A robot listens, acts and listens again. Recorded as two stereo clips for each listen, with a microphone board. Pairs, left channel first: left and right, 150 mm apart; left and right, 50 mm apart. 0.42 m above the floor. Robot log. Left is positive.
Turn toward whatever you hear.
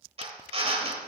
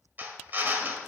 note: The drill: about 40° right or 140° right.
cmd yaw -40
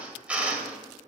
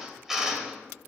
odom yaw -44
note: So it is at 10° right.
cmd yaw -10
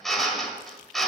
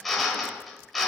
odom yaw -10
end: Found it: a drill, straight ahead, 1 to 2 m away.